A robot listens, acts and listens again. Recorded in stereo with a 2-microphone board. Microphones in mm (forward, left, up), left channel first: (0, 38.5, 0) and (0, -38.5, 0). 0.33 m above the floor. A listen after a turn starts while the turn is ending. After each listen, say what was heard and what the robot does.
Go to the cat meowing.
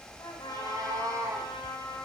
The cat meowing: about 50° right or 130° right. Turn 50° right.
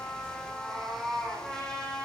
Drive 1.0 m forward.
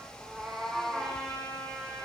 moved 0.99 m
Drive 1.0 m forward.
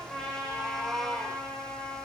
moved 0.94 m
Drive 1.0 m forward.
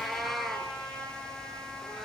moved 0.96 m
Drive 1.0 m forward.
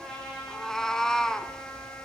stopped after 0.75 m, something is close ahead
The cat meowing is now 10° left. Turn 10° left.
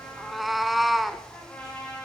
I am next to the cat meowing.